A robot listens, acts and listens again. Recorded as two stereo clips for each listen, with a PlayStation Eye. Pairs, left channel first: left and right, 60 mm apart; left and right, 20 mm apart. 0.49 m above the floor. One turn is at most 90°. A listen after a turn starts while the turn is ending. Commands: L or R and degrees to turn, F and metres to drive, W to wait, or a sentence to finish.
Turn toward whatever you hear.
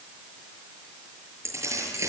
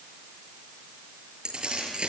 R55
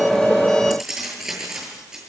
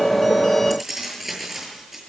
R10
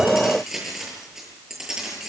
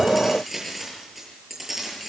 R10
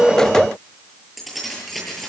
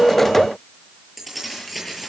Facing the keys jangling.